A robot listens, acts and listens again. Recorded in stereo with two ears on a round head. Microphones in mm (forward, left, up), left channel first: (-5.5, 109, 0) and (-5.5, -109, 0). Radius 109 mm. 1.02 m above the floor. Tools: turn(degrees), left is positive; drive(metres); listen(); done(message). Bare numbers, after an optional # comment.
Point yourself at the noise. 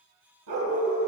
# The dog barking: about 75° right or 105° right.
turn(-75)
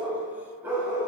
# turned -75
# So it is at 10° right.
turn(-10)
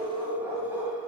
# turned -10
# The dog barking is now 10° right.
turn(-10)
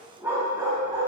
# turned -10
# The dog barking is now 15° right.
turn(-15)
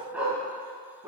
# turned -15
# The dog barking is now 10° right.
turn(-10)
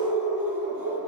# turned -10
done("Found it: a dog barking, straight ahead, 2 to 4 m away.")